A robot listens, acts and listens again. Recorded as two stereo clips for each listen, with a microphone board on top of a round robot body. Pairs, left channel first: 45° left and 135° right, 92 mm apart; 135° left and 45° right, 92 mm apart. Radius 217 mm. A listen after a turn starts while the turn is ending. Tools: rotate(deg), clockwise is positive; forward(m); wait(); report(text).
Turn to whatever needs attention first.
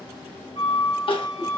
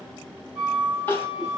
rotate(-70)
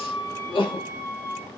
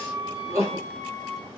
rotate(-15)
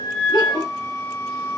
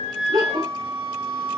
report("Facing the crying, 1 to 2 m away.")